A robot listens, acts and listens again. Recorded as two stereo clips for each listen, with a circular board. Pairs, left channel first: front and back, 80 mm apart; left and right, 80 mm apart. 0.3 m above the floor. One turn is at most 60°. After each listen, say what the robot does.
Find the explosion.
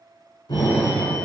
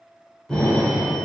Found it: an explosion, straight ahead, 1 to 2 m away.